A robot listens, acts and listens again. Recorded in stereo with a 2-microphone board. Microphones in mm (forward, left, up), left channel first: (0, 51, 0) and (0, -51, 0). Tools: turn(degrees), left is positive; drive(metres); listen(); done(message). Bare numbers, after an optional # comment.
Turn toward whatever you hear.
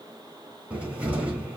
turn(-30)
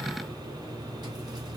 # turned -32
# So it is at 135° right.
turn(-135)
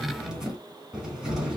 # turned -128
# The cupboard door is now 10° right.
turn(-10)
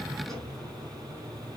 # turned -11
done("Facing the cupboard door.")